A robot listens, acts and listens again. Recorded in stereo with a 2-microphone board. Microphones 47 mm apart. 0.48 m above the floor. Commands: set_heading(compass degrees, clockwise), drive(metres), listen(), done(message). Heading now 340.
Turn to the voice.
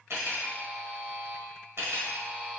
listen()
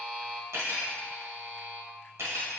listen()
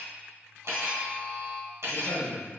set_heading(30)
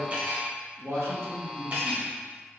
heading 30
set_heading(105)
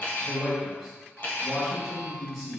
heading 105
done("Found it: a man speaking, straight ahead, 1 to 2 m away.")